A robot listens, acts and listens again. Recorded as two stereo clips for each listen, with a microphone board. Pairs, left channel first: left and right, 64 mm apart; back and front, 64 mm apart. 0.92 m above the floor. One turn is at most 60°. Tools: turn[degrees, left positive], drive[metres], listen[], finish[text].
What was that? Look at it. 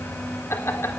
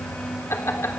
Thought: The laughter: 135° left.
Action: turn[60]
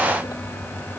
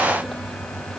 Thought: Nothing new. It was at 75° left.
Action: turn[60]
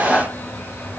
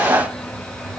Thought: The laughter is now 20° left.
Action: turn[20]
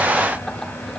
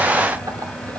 Action: finish[Facing the laughter.]